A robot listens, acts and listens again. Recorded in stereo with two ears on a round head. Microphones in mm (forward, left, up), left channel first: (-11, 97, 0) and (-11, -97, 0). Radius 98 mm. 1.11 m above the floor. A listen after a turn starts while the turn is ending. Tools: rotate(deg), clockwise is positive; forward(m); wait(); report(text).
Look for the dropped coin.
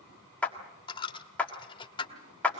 rotate(-20)
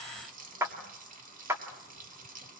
wait()
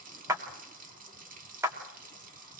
report("I heard a dropped coin, but can't make it out now. It was about straight ahead or 140° left.")